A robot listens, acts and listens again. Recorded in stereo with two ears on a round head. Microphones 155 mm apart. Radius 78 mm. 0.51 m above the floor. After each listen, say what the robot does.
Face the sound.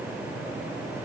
Keep listening.
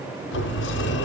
Turn 90° left.
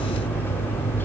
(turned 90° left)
Turn 10° left.
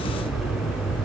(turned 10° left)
Found it: a sliding door, straight ahead.